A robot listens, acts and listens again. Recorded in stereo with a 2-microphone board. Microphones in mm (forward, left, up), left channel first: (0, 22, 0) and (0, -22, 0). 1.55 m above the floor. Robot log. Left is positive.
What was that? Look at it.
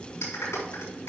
cmd yaw +90
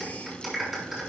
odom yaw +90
note: So it is at 10° right.
cmd yaw -10
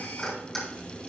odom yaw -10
end: Facing the clap.